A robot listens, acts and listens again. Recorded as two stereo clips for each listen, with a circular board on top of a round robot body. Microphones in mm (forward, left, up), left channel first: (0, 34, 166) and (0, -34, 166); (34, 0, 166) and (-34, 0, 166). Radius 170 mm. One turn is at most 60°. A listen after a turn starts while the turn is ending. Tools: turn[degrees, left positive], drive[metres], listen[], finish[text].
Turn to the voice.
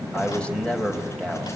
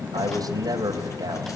Thought: The man speaking: 165° left.
Action: turn[60]
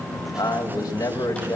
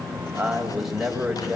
Thought: The man speaking is now 95° left.
Action: turn[60]
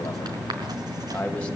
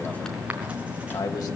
Thought: The man speaking is now 15° left.
Action: turn[15]
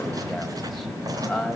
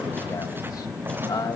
Action: finish[Found it: a man speaking, straight ahead, over 4 m away.]